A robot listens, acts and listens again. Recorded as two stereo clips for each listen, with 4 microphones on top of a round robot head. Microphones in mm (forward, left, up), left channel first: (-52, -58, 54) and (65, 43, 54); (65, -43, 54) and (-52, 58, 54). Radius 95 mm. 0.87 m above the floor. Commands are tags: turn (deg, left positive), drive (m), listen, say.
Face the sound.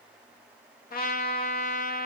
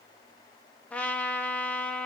<turn deg="-120"/>
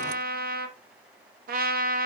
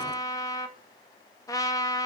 <turn deg="25"/>
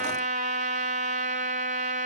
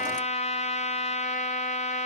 <say>Facing the trumpet, 1 to 2 m away.</say>